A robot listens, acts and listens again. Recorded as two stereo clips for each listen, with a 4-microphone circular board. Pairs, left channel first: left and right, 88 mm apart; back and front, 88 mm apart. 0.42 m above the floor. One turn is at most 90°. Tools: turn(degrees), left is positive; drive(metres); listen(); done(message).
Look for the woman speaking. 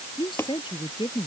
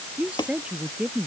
turn(degrees=75)
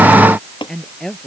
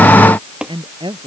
done("Facing the woman speaking.")